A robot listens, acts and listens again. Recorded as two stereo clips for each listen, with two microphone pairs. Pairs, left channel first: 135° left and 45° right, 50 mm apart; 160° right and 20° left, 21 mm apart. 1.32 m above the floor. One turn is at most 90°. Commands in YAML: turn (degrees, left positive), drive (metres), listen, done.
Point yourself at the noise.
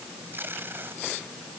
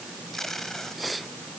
turn: -90
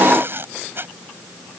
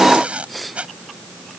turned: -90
done: "Facing the tape being pulled."